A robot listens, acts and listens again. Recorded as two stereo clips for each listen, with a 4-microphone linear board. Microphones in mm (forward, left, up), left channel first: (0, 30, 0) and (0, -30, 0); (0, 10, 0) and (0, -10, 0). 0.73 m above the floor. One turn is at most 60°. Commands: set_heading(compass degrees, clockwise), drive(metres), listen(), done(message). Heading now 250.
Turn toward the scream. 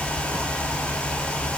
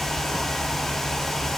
listen()
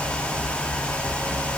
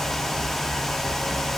listen()
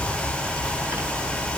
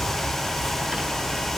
done("I can't make out a scream to turn to.")